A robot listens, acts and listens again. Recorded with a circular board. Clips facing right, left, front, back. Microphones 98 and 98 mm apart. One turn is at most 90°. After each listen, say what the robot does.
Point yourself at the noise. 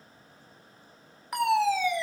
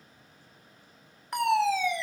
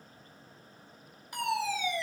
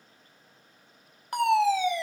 Turn 90° right.
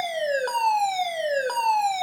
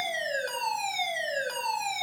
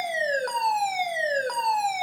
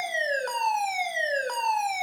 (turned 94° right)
Turn 85° right.
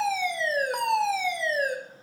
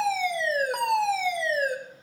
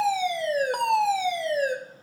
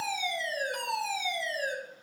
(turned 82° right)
Found it: a fire alarm, straight ahead.